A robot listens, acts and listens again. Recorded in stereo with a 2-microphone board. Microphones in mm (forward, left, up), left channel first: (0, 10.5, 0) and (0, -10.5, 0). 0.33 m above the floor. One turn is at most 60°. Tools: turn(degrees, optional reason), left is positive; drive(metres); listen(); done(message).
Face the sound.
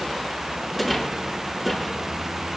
turn(degrees=30)
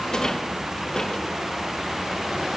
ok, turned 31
turn(degrees=60, reason="So it is at 145° left.")
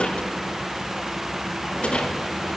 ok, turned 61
turn(degrees=60, reason="The rattle is now 85° left.")
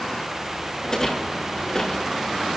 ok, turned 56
turn(degrees=25, reason="The rattle is now 25° left.")
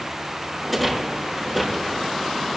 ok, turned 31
done("Found it: a rattle, straight ahead, over 4 m away.")